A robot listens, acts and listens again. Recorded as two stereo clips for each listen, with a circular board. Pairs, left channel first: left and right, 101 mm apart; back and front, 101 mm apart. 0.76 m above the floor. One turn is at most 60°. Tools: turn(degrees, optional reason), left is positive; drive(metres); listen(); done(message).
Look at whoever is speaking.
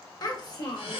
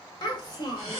turn(degrees=60, reason="The child speaking: 130° left.")
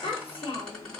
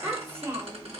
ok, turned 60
turn(degrees=60, reason="The child speaking is now 60° left.")
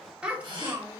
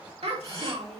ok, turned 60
turn(degrees=-20, reason="The child speaking is now 20° right.")
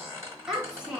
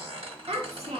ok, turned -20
turn(degrees=-10, reason="The child speaking is now 10° right.")
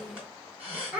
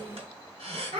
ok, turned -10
turn(degrees=-15, reason="The child speaking is now 15° right.")
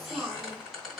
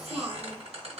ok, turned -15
done("Found it: a child speaking, straight ahead, 1 to 2 m away.")